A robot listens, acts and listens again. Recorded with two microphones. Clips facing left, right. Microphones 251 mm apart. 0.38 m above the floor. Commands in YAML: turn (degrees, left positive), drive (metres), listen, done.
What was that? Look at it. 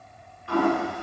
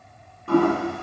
turn: -55
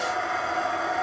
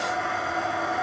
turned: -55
done: "Facing the toilet flushing."